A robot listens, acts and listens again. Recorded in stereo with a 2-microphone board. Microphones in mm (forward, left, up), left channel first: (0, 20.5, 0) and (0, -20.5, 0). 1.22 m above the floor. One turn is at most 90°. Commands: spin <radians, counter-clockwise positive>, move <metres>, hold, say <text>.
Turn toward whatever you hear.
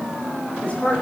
spin 0.52
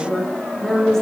spin 0.17
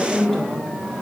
say Facing the woman speaking.